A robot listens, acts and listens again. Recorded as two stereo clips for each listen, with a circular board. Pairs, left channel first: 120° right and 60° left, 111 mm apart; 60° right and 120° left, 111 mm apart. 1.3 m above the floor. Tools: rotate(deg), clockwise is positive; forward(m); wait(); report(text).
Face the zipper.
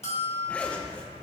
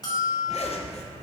rotate(40)
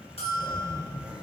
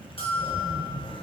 rotate(20)
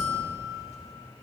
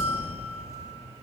report("Found it: a zipper, straight ahead.")